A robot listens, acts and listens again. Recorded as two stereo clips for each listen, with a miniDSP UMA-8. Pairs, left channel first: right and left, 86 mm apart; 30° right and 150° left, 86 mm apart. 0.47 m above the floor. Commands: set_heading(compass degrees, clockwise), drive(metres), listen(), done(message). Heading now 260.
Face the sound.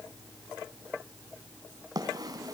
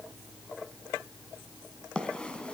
set_heading(215)
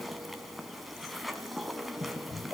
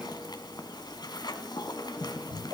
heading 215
done("Facing the bird, 2 to 4 m away.")